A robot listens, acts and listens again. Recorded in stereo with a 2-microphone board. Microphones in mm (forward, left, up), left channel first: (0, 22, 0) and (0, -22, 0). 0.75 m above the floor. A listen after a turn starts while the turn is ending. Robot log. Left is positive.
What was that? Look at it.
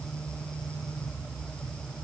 cmd idle
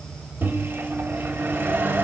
note: The microwave: about 60° right or 120° right.
cmd yaw -60
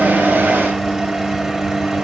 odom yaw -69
note: So it is at 15° right.
cmd yaw -15
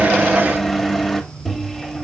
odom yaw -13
end: Found it: a microwave, straight ahead.